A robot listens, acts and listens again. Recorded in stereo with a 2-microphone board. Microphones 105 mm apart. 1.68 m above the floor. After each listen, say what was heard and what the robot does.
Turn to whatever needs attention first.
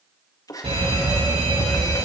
The fire alarm: about 65° right or 115° right. Turn 65° right.
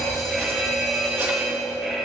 Facing the fire alarm.